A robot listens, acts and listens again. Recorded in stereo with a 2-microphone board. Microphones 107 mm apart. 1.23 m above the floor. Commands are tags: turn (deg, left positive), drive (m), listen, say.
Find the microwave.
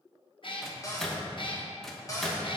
<turn deg="30"/>
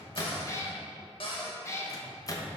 <turn deg="145"/>
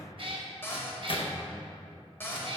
<turn deg="55"/>
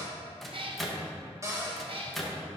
<say>Facing the microwave.</say>